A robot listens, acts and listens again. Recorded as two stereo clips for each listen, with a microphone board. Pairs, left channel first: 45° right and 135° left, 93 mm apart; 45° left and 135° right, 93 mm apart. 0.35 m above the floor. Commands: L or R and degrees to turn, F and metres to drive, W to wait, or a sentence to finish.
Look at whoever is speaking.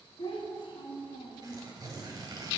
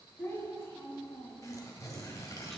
R20
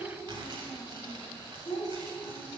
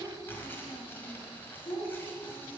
Found it: a child speaking, straight ahead.